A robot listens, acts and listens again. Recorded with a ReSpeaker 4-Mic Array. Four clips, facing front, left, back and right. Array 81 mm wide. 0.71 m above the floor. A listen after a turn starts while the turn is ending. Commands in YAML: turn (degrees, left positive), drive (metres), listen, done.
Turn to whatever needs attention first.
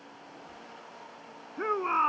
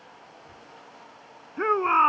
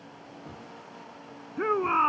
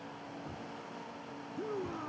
turn: 95
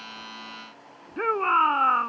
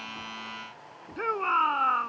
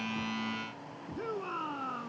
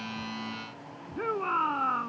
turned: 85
turn: 15
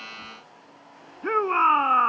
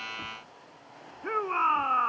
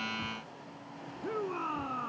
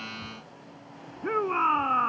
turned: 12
done: "Found it: a shout, straight ahead."